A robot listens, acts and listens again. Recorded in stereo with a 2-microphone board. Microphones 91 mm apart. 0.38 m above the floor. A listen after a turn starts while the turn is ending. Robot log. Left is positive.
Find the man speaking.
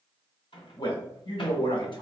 note: The man speaking: about 60° left or 120° left.
cmd yaw +60
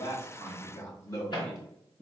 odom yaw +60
note: So it is at 35° left.
cmd yaw +35
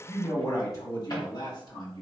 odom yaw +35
note: The man speaking is now 45° left.
cmd yaw +45
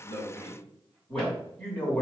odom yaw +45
note: The man speaking is now 15° left.
cmd yaw +15
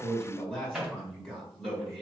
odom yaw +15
end: Facing the man speaking.